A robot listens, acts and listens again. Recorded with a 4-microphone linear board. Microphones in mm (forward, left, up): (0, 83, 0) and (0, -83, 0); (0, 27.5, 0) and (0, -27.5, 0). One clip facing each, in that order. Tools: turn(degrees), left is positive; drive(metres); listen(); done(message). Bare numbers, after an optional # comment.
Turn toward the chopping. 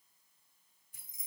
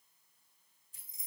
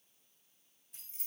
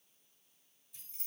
listen()
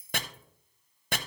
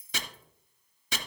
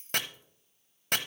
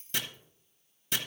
# The chopping: about 55° left or 125° left.
turn(55)
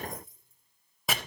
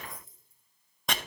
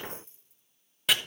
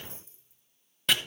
done("Facing the chopping, under 1 m away.")